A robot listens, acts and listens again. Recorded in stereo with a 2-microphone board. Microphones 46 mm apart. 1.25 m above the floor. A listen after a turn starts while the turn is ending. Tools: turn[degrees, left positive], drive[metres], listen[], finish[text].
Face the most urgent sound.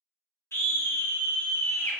Thought: The scream: about 65° left or 115° left.
Action: turn[65]
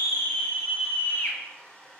Thought: So it is at 45° left.
Action: turn[45]
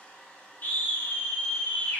Thought: The scream is now 40° left.
Action: turn[40]
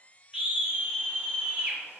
Thought: The scream is now 25° right.
Action: turn[-25]
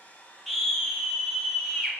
Action: finish[Facing the scream, 1 to 2 m away.]